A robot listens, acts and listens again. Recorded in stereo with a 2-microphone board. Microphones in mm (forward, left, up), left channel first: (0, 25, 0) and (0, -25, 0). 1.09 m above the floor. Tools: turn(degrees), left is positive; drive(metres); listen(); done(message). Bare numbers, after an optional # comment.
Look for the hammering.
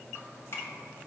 listen()
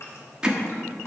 # The hammering: about 15° right or 165° right.
turn(-15)
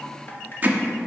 # So it is at 150° right.
turn(-150)
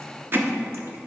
# The hammering is now 45° right.
turn(-45)
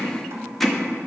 done("Facing the hammering, under 1 m away.")